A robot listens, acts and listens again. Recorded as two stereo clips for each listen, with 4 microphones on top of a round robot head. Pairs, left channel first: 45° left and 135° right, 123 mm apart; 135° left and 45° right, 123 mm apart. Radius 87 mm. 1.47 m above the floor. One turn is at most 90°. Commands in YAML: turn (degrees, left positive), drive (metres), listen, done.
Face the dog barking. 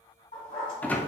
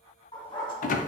turn: 80
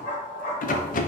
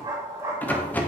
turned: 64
turn: 20
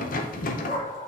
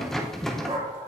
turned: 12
turn: 10
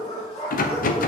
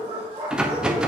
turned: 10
done: "Facing the dog barking, 2 to 4 m away."